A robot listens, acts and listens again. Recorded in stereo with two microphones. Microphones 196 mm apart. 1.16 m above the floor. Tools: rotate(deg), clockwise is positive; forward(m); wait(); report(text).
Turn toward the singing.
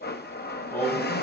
rotate(-15)
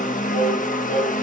rotate(-40)
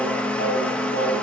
rotate(-90)
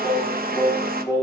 rotate(-15)
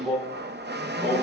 report("Facing the singing, over 4 m away.")